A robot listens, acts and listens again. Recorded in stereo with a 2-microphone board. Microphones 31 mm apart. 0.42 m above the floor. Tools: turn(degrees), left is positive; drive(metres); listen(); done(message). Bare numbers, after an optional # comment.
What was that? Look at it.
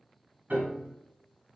# The piano: about 75° right or 105° right.
turn(-75)
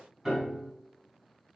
# So it is at 15° right.
turn(-15)
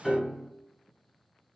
done("Facing the piano, 2 to 4 m away.")